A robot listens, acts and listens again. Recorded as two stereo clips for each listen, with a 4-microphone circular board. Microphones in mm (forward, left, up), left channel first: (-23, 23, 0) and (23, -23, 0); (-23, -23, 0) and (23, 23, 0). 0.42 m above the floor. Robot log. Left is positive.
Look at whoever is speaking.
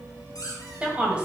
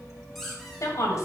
note: The woman speaking: 115° right.
cmd yaw -115
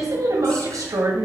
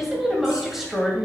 note: The woman speaking is now 40° right.
cmd yaw -40
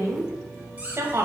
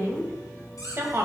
end: Found it: a woman speaking, straight ahead.